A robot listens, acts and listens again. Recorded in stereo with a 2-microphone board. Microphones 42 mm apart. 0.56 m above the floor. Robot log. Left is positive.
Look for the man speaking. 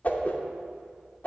cmd idle
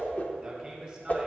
note: The man speaking: about 30° right or 150° right.
cmd yaw -30
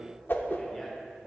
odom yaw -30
cmd idle
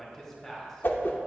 end: Facing the man speaking, 2 to 4 m away.